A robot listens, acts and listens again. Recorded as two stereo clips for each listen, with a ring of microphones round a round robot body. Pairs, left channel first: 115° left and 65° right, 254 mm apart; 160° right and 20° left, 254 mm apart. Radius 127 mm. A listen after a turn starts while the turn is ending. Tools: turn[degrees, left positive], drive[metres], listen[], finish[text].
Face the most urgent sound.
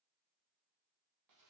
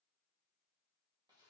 Action: listen[]
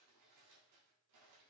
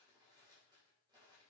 Action: listen[]
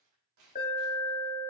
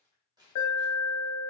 Thought: The alarm: 175° left.
Action: turn[175]
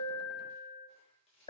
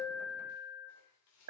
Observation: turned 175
Thought: The alarm is now 45° left.
Action: turn[45]
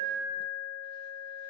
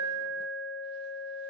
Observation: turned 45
Action: finish[Found it: an alarm, straight ahead, 2 to 4 m away.]